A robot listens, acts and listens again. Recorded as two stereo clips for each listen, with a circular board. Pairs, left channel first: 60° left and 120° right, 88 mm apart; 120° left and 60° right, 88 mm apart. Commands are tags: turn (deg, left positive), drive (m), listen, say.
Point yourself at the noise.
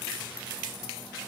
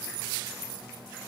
<listen/>
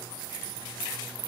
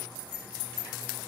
<listen/>
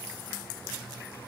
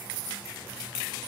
<say>I can't make out anything to turn to.</say>